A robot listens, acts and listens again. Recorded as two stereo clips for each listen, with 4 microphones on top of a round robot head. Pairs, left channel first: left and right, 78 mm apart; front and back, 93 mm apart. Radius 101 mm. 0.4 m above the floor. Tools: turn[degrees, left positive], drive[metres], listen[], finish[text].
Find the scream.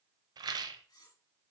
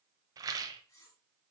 Action: listen[]
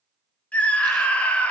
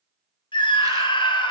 Thought: The scream: 20° left.
Action: turn[20]
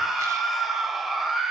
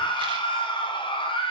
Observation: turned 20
Action: finish[Found it: a scream, straight ahead.]